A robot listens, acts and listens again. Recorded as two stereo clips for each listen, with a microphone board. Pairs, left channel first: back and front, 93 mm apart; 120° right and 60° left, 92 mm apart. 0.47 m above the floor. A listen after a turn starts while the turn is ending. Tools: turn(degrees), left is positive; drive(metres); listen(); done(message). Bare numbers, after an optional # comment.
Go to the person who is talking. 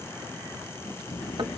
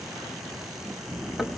# The child speaking: 140° left.
turn(140)
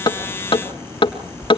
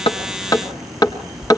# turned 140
drive(1.0)
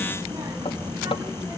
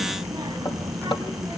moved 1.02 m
# The child speaking is now 10° left.
turn(10)
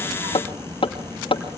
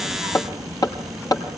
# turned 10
drive(1.0)
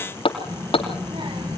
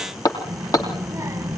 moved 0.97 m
drive(1.0)
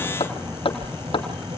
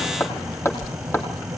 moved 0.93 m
drive(1.0)
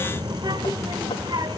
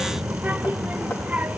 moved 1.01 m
# The child speaking is now 10° right.
turn(-10)
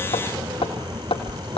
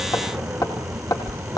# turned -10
drive(1.0)
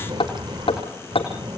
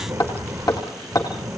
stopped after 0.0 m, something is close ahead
done("I am next to the child speaking.")